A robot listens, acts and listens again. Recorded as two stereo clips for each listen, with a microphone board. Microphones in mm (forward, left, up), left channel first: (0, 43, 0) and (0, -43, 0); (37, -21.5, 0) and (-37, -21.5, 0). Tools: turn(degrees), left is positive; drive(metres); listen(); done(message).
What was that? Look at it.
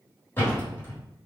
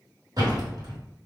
turn(degrees=155)
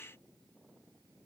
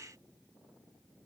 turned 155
done("I heard a door slam from this way, but can't make it out now.")